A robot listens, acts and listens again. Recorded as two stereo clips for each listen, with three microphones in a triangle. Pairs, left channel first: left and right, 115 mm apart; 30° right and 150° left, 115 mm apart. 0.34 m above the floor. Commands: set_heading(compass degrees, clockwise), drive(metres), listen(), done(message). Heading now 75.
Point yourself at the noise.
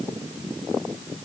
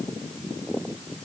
listen()
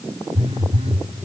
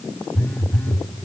set_heading(180)
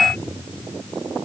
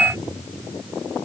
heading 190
set_heading(180)
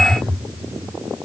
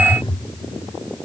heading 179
done("Found it: a phone buzzing, straight ahead, 1 to 2 m away.")